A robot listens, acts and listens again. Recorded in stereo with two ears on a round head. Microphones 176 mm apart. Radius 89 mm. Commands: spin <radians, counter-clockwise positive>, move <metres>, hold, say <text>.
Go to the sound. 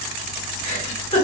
spin 0.61
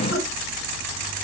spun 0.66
hold
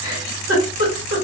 spin 1.75
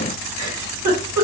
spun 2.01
spin -0.26
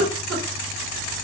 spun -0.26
move 1.0
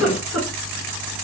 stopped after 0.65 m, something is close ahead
say I am next to the giggle.